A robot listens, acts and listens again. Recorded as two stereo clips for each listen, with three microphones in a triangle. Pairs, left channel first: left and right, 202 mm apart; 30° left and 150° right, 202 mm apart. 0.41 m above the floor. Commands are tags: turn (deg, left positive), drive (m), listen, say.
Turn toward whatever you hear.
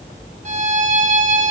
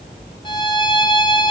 <turn deg="-30"/>
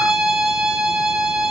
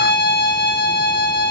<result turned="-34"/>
<say>Found it: a violin, straight ahead, 2 to 4 m away.</say>